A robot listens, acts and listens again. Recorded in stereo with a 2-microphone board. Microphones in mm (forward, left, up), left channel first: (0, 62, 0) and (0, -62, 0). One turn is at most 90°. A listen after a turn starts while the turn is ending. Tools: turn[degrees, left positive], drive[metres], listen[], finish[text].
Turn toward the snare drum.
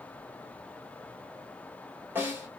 Thought: The snare drum: about 15° right or 165° right.
Action: turn[-15]
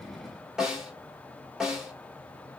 Action: finish[Facing the snare drum, 2 to 4 m away.]